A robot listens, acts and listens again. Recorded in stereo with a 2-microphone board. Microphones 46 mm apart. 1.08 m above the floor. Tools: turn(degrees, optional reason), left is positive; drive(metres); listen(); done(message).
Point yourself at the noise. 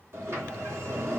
turn(degrees=-75, reason="The sliding door: about 75° right or 105° right.")
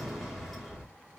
done("Facing the sliding door.")